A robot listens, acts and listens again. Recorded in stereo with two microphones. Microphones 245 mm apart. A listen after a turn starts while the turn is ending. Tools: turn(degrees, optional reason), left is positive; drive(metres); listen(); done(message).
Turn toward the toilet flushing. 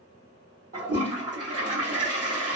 turn(degrees=-70, reason="The toilet flushing: about 70° right or 110° right.")
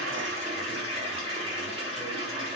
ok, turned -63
turn(degrees=-25, reason="So it is at 25° right.")
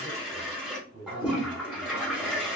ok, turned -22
done("Facing the toilet flushing, 1 to 2 m away.")